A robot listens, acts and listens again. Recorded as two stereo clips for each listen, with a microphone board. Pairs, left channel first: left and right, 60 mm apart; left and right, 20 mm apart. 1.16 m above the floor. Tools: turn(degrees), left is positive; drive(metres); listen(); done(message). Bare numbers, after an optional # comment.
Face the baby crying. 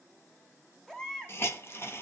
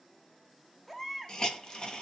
turn(30)
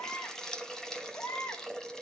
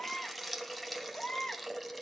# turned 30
# So it is at 135° left.
turn(135)
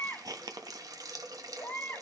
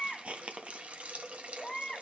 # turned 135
# The baby crying is now 35° left.
turn(35)
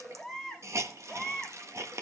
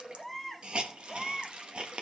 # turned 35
done("Facing the baby crying, 1 to 2 m away.")